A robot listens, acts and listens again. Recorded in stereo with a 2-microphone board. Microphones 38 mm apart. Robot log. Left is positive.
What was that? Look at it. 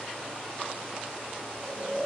note: The snoring: about 15° left or 165° left.
cmd yaw +15
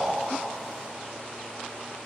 end: Found it: snoring, straight ahead.